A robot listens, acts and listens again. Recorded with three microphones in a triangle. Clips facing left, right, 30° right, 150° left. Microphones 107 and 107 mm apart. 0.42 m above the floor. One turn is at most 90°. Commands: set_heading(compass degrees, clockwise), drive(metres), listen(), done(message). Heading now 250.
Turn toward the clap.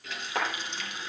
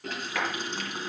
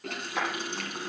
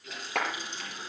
set_heading(160)
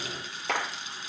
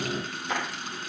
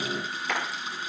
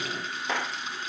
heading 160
set_heading(80)
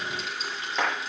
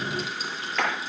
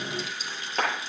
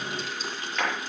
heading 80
set_heading(60)
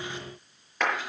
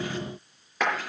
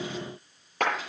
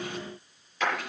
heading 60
done("Found it: a clap, straight ahead.")